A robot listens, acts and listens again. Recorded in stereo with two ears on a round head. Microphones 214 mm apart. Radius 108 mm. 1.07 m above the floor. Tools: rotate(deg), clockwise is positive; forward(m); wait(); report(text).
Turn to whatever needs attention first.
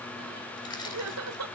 rotate(65)
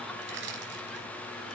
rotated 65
wait()
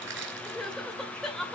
report("Found it: crying, straight ahead, 2 to 4 m away.")